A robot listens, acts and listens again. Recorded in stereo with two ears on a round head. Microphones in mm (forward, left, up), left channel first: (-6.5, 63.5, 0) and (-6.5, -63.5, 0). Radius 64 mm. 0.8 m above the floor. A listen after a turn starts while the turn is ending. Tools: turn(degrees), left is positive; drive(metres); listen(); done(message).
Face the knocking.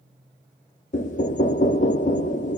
turn(degrees=60)
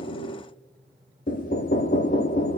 turn(degrees=60)
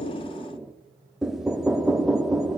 done("Found it: knocking, straight ahead, under 1 m away.")